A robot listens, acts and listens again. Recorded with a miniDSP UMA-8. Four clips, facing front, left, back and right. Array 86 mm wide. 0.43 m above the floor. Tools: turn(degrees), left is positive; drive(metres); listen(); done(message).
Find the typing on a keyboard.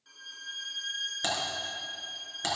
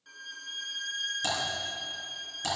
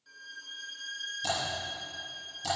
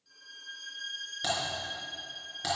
turn(degrees=-15)
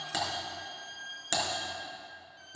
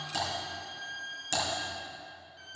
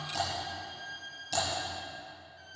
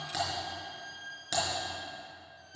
turn(degrees=-10)
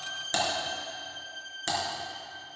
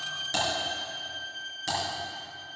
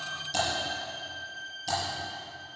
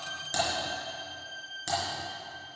done("Facing the typing on a keyboard.")